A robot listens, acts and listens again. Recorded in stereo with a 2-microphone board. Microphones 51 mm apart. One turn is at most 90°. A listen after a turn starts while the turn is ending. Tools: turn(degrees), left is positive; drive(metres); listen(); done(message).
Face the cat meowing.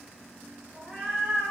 turn(degrees=-15)
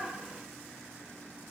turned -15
listen()
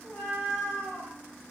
turn(degrees=30)
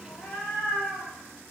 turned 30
turn(degrees=25)
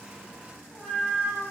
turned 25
turn(degrees=20)
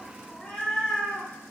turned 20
turn(degrees=10)
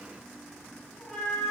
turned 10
done("Facing the cat meowing.")